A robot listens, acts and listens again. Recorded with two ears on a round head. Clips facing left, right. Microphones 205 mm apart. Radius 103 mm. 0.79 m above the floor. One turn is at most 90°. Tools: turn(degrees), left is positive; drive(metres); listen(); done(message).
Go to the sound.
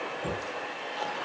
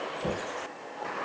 turn(degrees=-30)
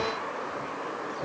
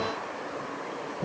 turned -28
turn(degrees=-90)
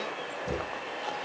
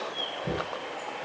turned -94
turn(degrees=-55)
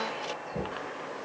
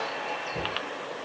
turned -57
drive(metres=1.0)
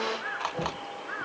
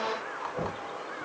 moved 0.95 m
drive(metres=1.0)
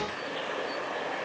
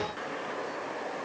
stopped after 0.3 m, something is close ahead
listen()
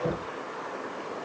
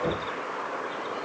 done("Something is in my way. I am facing the knocking but have not reached it.")